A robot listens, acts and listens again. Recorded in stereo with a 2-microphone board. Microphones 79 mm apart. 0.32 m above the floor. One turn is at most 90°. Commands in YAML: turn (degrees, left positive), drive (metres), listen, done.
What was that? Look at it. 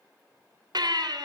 turn: -60
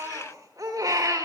turn: -50
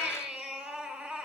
turn: -10
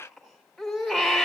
done: "Facing the baby crying."